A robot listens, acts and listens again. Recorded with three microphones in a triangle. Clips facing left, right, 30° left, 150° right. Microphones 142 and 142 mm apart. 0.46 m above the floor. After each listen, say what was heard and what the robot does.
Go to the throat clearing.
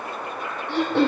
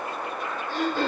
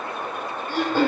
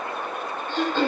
The throat clearing: 110° left. Turn 110° left.
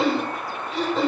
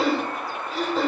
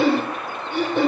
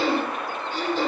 Drive 1.0 m forward.
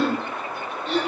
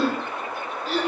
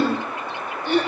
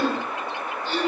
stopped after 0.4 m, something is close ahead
Something is in my way. I am facing the throat clearing but have not reached it.